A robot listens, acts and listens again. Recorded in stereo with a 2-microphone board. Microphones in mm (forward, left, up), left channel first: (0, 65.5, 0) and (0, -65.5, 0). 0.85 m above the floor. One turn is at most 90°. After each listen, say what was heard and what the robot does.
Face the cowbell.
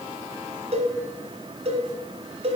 The cowbell: about 55° right or 125° right. Turn 55° right.
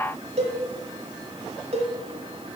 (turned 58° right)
So it is at 60° right. Turn 60° right.
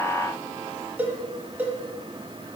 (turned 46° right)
The cowbell is now 15° right. Turn 15° right.
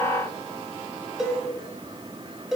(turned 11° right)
Found it: a cowbell, straight ahead, 1 to 2 m away.